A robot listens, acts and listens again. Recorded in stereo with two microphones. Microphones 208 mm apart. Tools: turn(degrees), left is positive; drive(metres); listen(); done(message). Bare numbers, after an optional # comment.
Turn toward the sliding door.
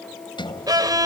# The sliding door: about 25° left or 155° left.
turn(25)
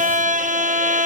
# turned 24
listen()
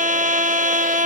listen()
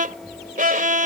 done("Found it: a sliding door, straight ahead.")